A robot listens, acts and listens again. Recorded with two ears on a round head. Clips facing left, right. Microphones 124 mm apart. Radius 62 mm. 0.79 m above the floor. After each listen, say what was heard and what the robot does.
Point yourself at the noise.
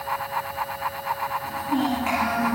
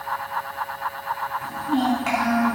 The child speaking: about 40° right or 140° right. Turn 40° right.
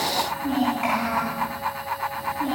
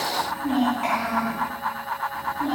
So it is at 15° left. Turn 15° left.
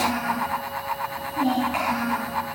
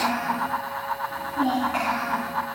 The child speaking is now 10° left. Turn 10° left.
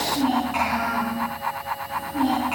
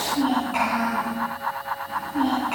Found it: a child speaking, straight ahead.